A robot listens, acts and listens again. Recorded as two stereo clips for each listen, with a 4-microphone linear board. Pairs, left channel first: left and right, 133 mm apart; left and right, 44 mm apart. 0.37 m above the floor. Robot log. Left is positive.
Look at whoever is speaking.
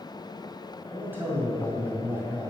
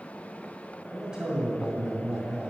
note: The man speaking: about 15° right or 165° right.
cmd yaw -15
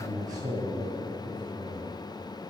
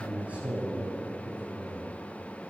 note: So it is at 150° right.
cmd yaw -150
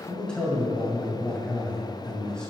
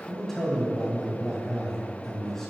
note: The man speaking is now 10° left.
cmd yaw +10
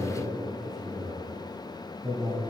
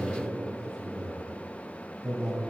end: Found it: a man speaking, straight ahead, 2 to 4 m away.